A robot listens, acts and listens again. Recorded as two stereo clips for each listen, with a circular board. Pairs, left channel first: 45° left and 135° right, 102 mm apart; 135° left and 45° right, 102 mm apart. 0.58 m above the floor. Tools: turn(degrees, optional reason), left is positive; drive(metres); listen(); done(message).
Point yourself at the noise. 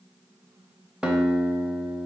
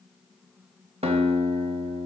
turn(degrees=-55, reason="The guitar: 55° right.")
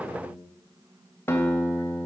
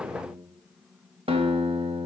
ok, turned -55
turn(degrees=-20, reason="The guitar is now 20° right.")
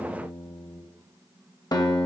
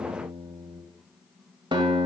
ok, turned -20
done("Facing the guitar.")